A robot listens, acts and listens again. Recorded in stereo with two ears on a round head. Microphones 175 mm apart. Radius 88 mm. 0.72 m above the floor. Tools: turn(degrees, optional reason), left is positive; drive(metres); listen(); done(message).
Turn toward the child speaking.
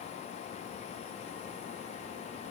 listen()
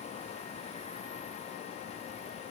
listen()
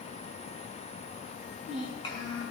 turn(degrees=25, reason="The child speaking: about 25° left or 155° left.")
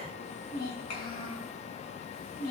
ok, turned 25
turn(degrees=130, reason="So it is at 130° left.")
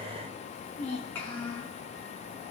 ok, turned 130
turn(degrees=10, reason="The child speaking is now 10° left.")
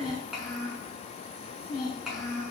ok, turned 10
done("Facing the child speaking, over 4 m away.")